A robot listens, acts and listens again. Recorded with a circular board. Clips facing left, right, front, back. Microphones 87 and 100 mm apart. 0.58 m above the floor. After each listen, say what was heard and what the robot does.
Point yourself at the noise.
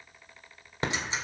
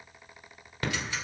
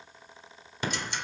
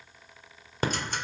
The ticking: 150° left. Turn 150° left.
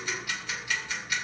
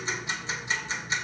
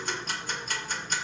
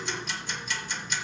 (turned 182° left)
The ticking is now 30° right. Turn 30° right.
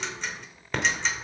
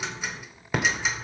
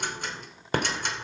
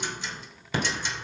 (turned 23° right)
The ticking is now 10° right. Turn 10° right.
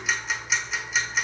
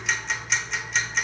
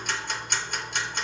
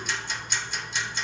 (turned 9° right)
Facing the ticking.